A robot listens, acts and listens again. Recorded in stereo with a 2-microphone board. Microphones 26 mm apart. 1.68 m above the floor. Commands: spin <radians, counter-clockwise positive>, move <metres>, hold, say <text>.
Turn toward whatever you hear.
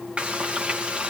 spin -0.87
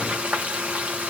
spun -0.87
spin -1.40
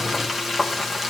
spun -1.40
spin -0.17
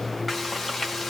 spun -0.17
say Found it: frying, straight ahead.